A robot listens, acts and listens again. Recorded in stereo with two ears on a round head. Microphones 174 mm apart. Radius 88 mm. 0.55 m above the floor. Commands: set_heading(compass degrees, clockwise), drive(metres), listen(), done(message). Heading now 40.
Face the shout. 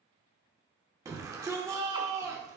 set_heading(55)
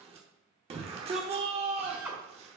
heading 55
set_heading(205)
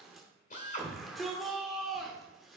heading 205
done("Found it: a shout, straight ahead.")